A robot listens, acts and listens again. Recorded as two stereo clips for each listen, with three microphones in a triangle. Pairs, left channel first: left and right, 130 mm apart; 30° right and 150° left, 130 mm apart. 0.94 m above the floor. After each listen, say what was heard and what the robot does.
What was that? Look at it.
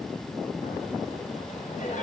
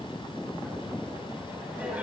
The laughter: 70° left. Turn 70° left.
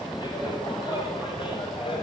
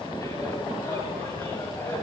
The laughter is now 40° left. Turn 40° left.
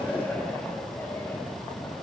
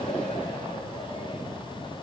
Keep listening.
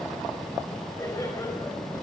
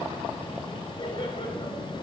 The laughter is now 20° left. Turn 20° left.
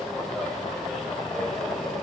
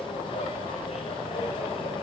Found it: laughter, straight ahead, over 4 m away.